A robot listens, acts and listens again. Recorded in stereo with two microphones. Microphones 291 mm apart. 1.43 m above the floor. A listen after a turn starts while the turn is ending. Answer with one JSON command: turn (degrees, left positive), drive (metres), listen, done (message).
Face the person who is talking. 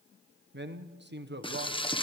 {"turn": -40}
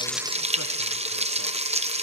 {"listen": true}
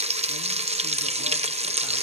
{"listen": true}
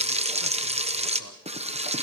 {"done": "I heard a man speaking, but can't make it out now. It was about straight ahead or 100° right."}